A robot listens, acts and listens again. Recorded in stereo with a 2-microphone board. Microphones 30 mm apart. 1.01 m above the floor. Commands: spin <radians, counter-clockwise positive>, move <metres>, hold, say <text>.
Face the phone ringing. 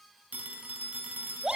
spin -1.13
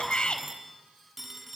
say Found it: a phone ringing, straight ahead, over 4 m away.